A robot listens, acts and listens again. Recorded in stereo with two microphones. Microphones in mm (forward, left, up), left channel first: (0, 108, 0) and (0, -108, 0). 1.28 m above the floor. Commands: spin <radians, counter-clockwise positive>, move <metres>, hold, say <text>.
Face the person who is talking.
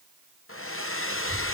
spin 0.96
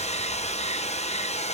hold
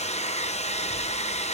hold
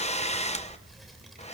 say Facing the child speaking.